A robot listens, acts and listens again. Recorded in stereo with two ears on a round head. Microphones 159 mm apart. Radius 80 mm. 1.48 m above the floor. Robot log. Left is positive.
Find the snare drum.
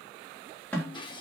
cmd yaw +30
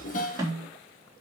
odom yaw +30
note: So it is at 20° right.
cmd yaw -20
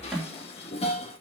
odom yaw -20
end: Facing the snare drum.